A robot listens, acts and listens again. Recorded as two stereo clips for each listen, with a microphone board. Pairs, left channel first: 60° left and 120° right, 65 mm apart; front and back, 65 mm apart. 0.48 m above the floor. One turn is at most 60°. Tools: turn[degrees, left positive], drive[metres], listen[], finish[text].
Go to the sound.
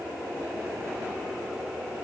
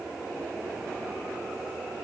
Action: listen[]
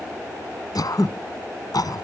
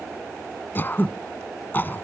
Thought: The throat clearing: 60° left.
Action: turn[60]
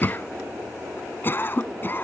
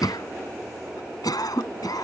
Action: drive[1.0]
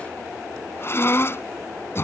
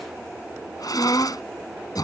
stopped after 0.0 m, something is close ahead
Thought: The throat clearing is now 10° left.
Action: turn[10]
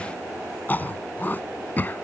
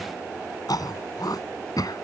Action: finish[Something is in my way. I am facing the throat clearing but have not reached it.]